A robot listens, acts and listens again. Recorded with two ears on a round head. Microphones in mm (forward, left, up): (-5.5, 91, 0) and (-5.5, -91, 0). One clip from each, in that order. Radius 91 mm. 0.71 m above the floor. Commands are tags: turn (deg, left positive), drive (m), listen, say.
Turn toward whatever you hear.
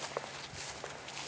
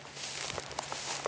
<listen/>
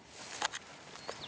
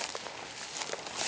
<listen/>
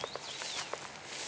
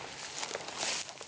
<say>I can't make out anything to turn to.</say>